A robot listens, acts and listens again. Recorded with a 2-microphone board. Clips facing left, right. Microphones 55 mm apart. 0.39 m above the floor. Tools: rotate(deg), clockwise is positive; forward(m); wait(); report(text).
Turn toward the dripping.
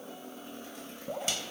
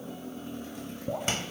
rotate(30)
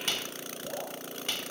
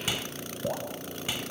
rotate(135)
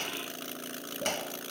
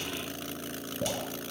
report("Facing the dripping, over 4 m away.")